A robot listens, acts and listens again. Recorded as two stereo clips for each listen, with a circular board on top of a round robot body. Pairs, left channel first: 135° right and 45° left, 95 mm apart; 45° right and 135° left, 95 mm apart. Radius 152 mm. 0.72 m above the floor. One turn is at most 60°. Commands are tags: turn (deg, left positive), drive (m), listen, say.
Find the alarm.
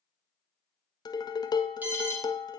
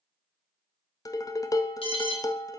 <turn deg="-25"/>
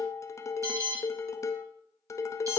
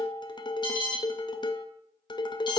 <turn deg="-10"/>
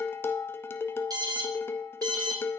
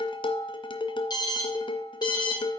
<say>Found it: an alarm, straight ahead.</say>